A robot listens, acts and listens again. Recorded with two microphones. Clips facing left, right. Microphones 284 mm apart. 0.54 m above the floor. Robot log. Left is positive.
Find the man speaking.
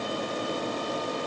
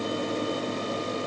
cmd idle
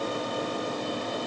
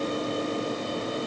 cmd idle
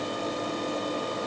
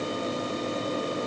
end: I can't make out a man speaking.